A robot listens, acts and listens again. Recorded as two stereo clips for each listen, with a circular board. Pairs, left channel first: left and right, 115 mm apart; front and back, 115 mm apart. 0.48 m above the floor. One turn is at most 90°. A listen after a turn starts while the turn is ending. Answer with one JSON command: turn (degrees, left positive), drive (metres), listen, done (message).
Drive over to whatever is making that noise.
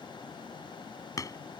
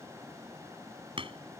{"turn": 90}
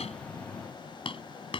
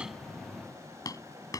{"turn": 55}
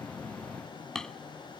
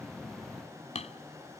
{"drive": 1.0}
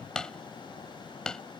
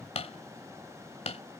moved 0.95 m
{"drive": 1.0}
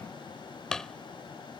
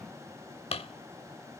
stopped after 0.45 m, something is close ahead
{"done": "I am next to the hammering."}